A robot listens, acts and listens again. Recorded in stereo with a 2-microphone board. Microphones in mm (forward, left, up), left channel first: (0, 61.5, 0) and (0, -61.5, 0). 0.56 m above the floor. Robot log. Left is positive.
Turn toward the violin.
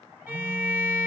note: The violin: about 20° right or 160° right.
cmd yaw -20
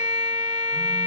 note: So it is at 140° right.
cmd yaw -140
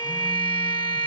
note: The violin is now 45° left.
cmd yaw +45
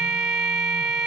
end: Found it: a violin, straight ahead.